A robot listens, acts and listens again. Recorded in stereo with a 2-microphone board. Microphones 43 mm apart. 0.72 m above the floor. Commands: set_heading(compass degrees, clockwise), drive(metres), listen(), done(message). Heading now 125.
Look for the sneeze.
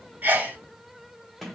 set_heading(165)
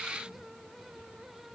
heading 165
listen()
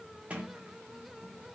done("I heard a sneeze, but can't make it out now. It was about straight ahead or 100° right.")